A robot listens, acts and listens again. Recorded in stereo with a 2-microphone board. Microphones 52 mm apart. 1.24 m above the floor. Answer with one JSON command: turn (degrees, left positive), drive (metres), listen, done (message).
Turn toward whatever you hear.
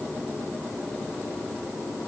{"listen": true}
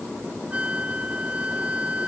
{"turn": -25}
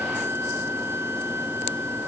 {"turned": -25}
{"turn": -130}
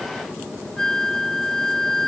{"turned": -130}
{"turn": 10}
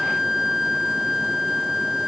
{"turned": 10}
{"done": "Found it: a flute, straight ahead."}